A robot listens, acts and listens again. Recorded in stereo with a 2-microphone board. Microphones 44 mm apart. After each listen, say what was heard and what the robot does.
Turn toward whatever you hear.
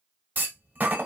The clunk: about 40° right or 140° right. Turn 40° right.
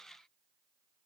Keep listening.
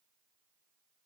I heard a clunk, but can't make it out now. It was about straight ahead or 100° right.